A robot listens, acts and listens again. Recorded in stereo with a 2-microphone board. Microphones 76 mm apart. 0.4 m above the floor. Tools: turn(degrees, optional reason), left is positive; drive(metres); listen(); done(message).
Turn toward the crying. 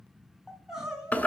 turn(degrees=-30)
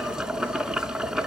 listen()
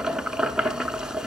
listen()
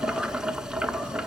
done("I heard crying, but can't make it out now. It was about 20° left or 140° right.")